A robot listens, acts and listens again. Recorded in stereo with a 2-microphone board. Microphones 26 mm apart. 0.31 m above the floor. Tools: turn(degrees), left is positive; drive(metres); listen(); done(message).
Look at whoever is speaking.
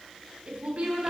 turn(degrees=-45)
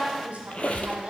turn(degrees=-80)
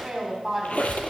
turn(degrees=-20)
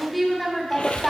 done("Found it: a woman speaking, straight ahead, 1 to 2 m away.")